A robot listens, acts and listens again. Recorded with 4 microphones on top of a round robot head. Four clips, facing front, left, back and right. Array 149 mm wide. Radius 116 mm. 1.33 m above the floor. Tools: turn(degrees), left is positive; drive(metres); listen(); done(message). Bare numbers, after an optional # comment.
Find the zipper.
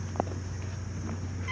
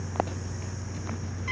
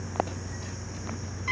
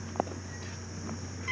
listen()
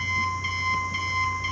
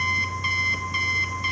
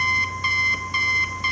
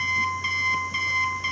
listen()
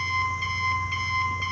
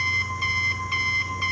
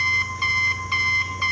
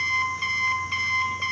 done("I can't make out a zipper, only an alarm clock.")